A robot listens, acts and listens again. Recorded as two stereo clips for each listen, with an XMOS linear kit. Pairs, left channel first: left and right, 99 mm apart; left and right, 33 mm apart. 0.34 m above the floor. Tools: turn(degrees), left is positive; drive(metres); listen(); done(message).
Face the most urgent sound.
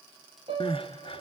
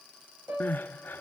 turn(degrees=65)
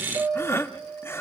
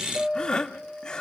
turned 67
turn(degrees=30)
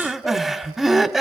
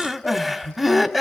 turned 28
done("Found it: crying, straight ahead.")